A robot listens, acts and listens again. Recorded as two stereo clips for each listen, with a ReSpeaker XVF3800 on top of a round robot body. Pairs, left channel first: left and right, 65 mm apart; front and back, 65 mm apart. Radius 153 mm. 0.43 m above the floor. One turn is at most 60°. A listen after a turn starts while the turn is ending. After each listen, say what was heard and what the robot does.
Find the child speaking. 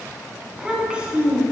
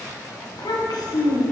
The child speaking: 20° right. Turn 20° right.
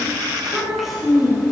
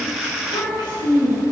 Facing the child speaking, 2 to 4 m away.